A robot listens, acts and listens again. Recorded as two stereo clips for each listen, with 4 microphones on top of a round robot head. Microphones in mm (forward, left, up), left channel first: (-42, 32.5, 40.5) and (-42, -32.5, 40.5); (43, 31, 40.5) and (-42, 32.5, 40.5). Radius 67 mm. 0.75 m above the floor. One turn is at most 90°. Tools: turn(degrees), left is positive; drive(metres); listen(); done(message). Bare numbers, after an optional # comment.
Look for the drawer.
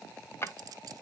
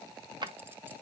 # The drawer: 145° left.
turn(90)
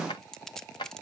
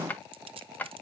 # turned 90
# The drawer is now 70° left.
turn(70)
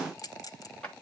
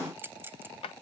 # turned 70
# The drawer is now 10° left.
turn(10)
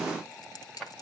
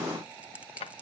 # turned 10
done("Found it: a drawer, straight ahead, 1 to 2 m away.")